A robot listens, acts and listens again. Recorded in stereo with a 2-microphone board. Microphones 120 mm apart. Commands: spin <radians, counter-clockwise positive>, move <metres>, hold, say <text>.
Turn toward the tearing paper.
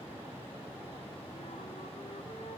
hold
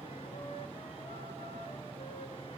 hold
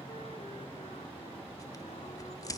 spin 0.52
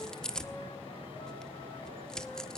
say Facing the tearing paper.